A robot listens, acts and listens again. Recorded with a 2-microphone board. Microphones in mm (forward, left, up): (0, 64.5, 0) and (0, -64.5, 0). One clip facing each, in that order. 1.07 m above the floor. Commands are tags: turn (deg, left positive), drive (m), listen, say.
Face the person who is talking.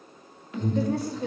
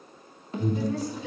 <turn deg="60"/>
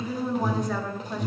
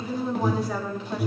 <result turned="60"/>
<turn deg="-10"/>
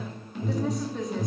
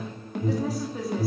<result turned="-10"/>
<say>Facing the woman speaking.</say>